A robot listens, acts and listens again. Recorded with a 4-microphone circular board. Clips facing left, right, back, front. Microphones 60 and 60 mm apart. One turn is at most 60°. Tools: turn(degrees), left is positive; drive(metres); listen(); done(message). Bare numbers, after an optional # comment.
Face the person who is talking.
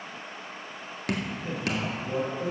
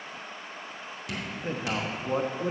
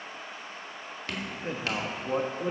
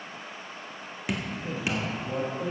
# The man speaking: 130° right.
turn(-60)
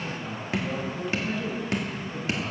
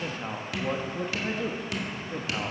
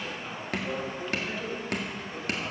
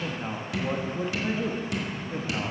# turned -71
# The man speaking is now 55° right.
turn(-55)
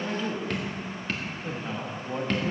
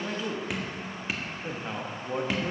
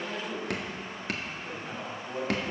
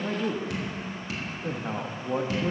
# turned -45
# The man speaking is now 15° right.
turn(-15)
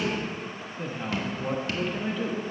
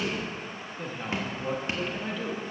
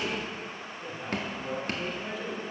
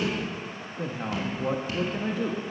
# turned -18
done("Facing the man speaking.")